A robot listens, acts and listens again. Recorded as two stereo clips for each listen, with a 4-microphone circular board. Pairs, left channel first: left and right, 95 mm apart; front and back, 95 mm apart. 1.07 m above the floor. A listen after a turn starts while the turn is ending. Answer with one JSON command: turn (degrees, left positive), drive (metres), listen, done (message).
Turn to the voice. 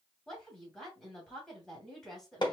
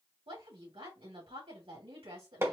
{"turn": 175}
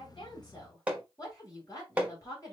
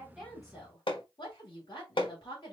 {"turn": 40}
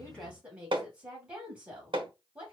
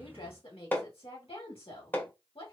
{"turn": -15}
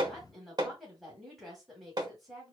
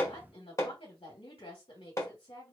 {"done": "Found it: a woman speaking, straight ahead, 2 to 4 m away."}